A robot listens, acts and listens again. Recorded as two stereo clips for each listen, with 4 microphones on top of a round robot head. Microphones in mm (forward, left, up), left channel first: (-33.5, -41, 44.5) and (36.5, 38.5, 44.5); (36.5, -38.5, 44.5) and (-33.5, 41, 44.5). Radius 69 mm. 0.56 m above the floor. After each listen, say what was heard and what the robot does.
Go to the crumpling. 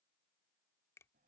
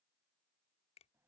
Keep listening.
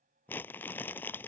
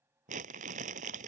The crumpling: 155° left. Turn 155° left.
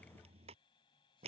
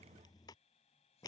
The crumpling is now 10° left. Turn 10° left.
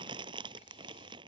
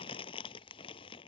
Drive 1.0 m forward.
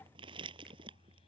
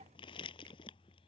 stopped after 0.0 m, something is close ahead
Something is in my way. I am facing the crumpling but have not reached it.